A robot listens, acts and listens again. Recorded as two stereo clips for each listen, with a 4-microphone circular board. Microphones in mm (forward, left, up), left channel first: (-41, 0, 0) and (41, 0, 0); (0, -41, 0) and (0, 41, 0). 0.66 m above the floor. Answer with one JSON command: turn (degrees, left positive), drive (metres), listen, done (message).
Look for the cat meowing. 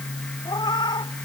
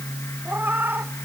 {"turn": 155}
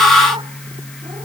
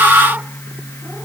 {"listen": true}
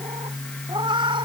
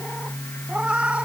{"turn": 15}
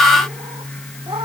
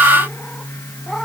{"listen": true}
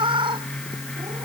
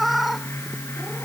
{"done": "Facing the cat meowing."}